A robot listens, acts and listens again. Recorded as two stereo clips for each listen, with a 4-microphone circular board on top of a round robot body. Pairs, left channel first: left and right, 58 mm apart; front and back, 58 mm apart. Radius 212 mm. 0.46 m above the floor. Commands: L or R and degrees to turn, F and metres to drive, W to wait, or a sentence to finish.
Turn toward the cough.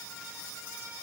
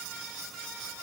W
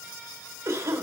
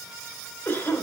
R50
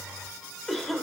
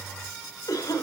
Facing the cough.